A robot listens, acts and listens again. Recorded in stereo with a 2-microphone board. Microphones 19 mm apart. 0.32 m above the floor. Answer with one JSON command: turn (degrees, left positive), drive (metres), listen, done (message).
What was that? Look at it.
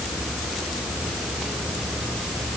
{"listen": true}
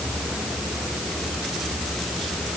{"listen": true}
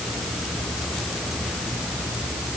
{"done": "I can't make out anything."}